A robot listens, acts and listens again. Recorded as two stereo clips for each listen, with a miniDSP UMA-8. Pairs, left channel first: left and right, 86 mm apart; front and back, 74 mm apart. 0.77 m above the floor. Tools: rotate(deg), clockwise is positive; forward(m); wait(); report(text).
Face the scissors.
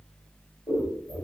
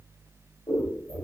rotate(-45)
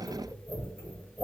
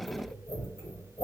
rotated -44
report("Found it: scissors, straight ahead.")